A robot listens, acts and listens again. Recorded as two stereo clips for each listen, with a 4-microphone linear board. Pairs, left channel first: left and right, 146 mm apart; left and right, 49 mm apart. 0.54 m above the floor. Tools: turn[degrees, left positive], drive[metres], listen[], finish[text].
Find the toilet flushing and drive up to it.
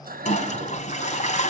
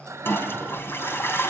Thought: The toilet flushing: about 50° left or 130° left.
Action: turn[50]
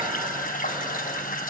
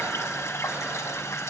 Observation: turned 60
Thought: So it is at 70° left.
Action: turn[70]
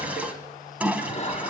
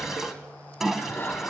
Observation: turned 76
Thought: The toilet flushing is now 10° right.
Action: turn[-10]
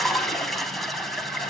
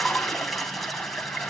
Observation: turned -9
Action: drive[1.0]
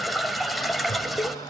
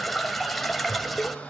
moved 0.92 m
Action: drive[1.0]
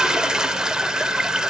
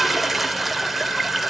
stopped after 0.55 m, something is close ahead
Action: finish[I am next to the toilet flushing.]